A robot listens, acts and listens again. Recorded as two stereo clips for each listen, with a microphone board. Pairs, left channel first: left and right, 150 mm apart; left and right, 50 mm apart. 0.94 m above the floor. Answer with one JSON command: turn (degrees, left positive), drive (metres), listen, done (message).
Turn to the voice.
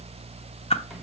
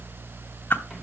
{"listen": true}
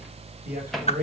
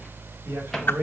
{"turn": -65}
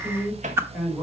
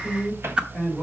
{"done": "Found it: a man speaking, straight ahead."}